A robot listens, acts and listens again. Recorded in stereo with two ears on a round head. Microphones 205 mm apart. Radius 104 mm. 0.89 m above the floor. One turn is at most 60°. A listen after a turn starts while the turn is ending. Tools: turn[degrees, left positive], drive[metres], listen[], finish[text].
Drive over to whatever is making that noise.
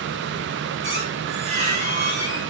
Thought: The squeak: about 30° right or 150° right.
Action: turn[-30]
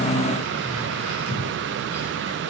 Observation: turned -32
Action: listen[]
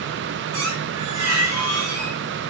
Thought: So it is at 115° right.
Action: turn[-60]
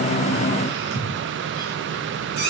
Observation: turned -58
Thought: The squeak is now 60° right.
Action: turn[-60]
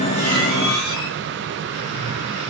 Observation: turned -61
Action: drive[1.0]
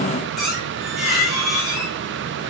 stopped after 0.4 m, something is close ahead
Action: finish[Something is in my way. I am facing the squeak but have not reached it.]